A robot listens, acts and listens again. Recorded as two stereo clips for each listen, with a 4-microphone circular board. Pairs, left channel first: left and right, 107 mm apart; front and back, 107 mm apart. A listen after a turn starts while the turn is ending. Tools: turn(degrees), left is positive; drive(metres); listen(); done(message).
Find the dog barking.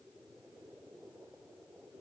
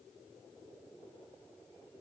listen()
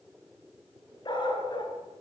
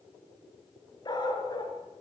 turn(degrees=50)
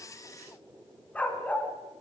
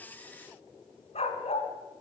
turn(degrees=15)
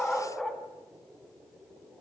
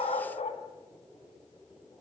done("Found it: a dog barking, straight ahead, 1 to 2 m away.")